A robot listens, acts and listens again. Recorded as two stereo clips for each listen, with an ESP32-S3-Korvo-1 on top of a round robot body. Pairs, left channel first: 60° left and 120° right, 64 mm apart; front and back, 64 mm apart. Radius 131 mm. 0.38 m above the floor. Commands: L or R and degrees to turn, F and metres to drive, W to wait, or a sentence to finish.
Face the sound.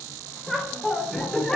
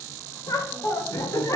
R15
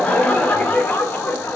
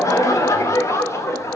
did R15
L20
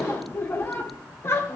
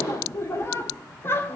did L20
L35
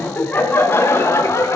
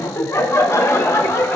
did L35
L30
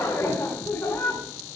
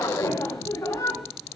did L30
Facing the laughter, 2 to 4 m away.